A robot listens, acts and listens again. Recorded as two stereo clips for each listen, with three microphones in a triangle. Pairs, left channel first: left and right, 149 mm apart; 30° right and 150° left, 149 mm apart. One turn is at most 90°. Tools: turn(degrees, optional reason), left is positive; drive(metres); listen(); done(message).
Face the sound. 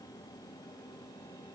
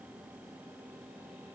listen()
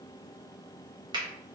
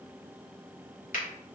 turn(degrees=-35, reason="The finger snap: 35° right.")
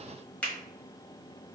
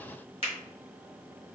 turn(degrees=10, reason="The finger snap is now 10° left.")
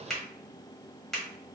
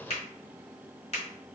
done("Facing the finger snap.")